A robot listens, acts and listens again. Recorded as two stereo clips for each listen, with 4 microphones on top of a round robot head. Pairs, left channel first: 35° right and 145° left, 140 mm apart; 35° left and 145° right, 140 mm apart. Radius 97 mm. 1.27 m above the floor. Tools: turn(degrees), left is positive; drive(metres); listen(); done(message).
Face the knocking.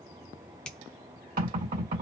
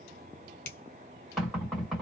turn(degrees=125)
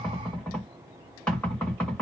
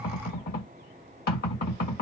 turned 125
turn(degrees=45)
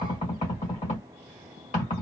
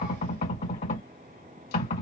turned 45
done("Found it: knocking, straight ahead.")